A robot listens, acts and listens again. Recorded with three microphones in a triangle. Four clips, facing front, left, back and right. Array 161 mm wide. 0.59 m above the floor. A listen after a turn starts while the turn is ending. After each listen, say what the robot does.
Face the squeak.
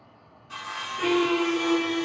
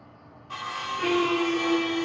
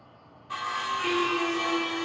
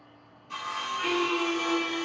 Turn 30° left.
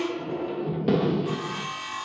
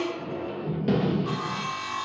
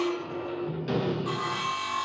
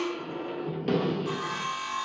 Found it: a squeak, straight ahead.